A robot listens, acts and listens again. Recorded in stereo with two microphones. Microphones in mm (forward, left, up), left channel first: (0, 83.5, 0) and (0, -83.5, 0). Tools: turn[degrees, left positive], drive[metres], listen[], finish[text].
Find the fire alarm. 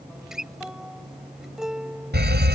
Thought: The fire alarm: about 75° right or 105° right.
Action: turn[-75]
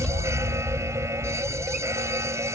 Thought: So it is at 15° right.
Action: turn[-15]
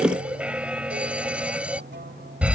Action: finish[Facing the fire alarm.]